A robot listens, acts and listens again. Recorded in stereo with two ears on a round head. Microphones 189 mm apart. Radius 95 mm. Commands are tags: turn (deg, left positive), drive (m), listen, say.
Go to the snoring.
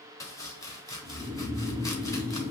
<turn deg="-30"/>
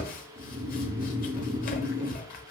<turn deg="-140"/>
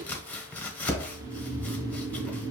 <turn deg="-20"/>
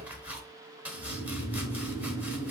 <drive m="1.0"/>
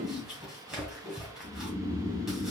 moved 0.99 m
<drive m="1.0"/>
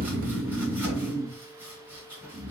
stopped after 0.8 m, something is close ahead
<say>I am next to the snoring.</say>